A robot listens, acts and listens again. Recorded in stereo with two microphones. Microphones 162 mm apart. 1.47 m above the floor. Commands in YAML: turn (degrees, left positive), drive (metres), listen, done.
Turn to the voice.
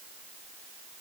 listen: true
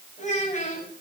turn: 45
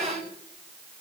done: "Found it: a child speaking, straight ahead."